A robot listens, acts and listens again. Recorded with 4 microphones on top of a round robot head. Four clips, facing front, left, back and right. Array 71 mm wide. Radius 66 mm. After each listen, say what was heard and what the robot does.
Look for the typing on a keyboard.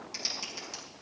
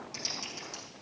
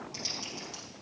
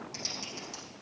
Found it: typing on a keyboard, straight ahead.